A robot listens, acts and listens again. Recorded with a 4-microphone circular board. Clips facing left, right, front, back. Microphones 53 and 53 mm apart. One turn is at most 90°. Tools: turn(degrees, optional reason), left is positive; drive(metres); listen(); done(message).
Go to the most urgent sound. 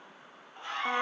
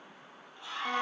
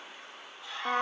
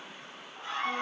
turn(degrees=90, reason="The scream: 135° left.")
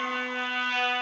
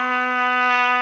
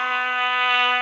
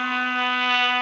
turn(degrees=45, reason="Nothing new. It was at 45° left.")
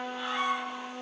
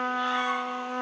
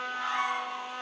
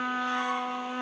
listen()
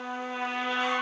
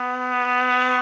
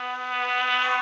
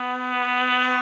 done("I heard a scream from this way, but can't make it out now. I did not reach it.")